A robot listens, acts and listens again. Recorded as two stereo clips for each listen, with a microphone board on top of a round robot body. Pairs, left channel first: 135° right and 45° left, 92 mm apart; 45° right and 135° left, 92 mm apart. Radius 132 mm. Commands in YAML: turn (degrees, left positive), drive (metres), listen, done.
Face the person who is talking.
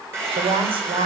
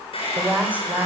turn: 65
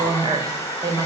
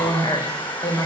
done: "Facing the woman speaking."